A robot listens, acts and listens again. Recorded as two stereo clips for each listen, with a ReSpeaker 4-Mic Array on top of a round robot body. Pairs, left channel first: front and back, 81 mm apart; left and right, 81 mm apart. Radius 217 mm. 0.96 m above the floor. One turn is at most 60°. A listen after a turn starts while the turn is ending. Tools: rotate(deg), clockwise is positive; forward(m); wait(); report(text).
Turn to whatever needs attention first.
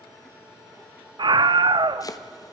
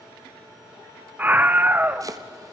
rotate(60)
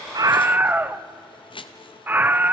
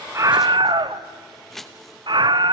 rotate(60)
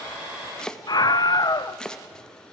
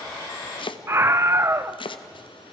rotate(35)
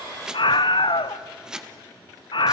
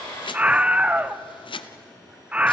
rotate(15)
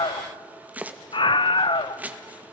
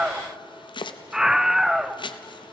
report("Found it: a scream, straight ahead.")